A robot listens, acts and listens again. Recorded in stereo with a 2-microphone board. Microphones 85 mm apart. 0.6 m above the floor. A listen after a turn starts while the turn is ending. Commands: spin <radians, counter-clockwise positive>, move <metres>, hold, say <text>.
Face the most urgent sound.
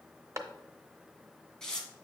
hold
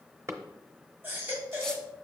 spin -0.44
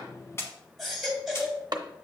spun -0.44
say Facing the baby crying.